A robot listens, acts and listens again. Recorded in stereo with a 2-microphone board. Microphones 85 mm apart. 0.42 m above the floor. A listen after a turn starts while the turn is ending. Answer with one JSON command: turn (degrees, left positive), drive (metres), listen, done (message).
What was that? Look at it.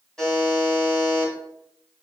{"turn": 30}
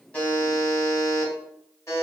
{"turn": 140}
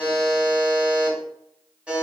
{"turn": -15}
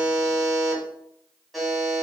{"done": "Facing the buzzer."}